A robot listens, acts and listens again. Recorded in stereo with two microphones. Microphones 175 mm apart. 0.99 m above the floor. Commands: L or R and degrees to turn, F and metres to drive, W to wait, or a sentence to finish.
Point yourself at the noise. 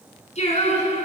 L40
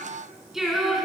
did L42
Found it: singing, straight ahead, over 4 m away.